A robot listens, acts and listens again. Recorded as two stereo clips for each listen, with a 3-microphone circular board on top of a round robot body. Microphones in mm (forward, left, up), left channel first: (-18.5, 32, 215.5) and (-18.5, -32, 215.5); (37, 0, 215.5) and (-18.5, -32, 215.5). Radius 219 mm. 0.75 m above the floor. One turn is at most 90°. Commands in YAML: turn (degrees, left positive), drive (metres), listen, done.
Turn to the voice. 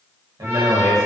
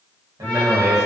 turn: -90
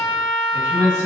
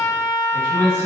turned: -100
turn: -20
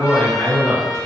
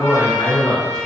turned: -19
done: "Facing the man speaking, 1 to 2 m away."